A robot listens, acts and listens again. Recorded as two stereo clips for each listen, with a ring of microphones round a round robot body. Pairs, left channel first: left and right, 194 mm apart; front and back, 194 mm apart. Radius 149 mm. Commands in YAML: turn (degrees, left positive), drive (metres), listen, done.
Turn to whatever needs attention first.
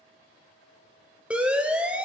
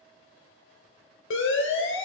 done: "Facing the siren, 2 to 4 m away."